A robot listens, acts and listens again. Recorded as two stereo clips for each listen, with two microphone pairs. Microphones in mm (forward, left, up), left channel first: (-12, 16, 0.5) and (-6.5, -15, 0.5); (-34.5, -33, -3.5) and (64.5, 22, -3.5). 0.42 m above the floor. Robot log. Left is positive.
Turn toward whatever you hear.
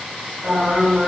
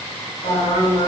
note: The singing: 145° right.
cmd yaw -145
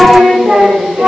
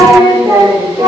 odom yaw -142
note: The singing is now 35° right.
cmd yaw -35
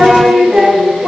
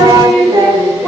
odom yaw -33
note: The singing is now 30° right.
cmd yaw -30
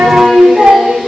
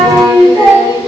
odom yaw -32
note: The singing is now 20° right.
cmd yaw -20
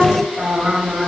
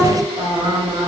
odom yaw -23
note: The singing is now 15° right.
cmd yaw -15
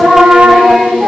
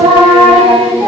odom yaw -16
end: Facing the singing.